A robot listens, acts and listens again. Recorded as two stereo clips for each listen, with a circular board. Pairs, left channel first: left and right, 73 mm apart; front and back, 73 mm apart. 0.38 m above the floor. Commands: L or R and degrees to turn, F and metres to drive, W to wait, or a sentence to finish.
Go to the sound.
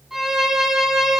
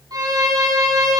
R175
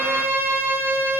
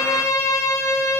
R35
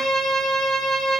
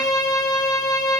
F1.0
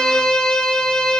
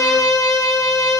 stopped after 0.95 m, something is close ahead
L15
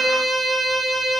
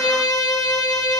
Arrived at the violin, straight ahead.